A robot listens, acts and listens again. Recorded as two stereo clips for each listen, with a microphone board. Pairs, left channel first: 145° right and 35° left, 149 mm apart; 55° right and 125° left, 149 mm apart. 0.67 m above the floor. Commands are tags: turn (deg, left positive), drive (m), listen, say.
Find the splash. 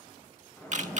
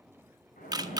<turn deg="-70"/>
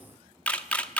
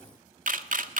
<say>Facing where the splash came from. I can't hear it now.</say>